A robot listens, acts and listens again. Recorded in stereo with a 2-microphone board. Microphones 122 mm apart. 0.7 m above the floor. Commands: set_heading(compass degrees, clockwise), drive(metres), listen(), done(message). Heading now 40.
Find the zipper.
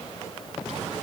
listen()
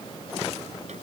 listen()
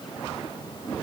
done("I can't make out a zipper to turn to.")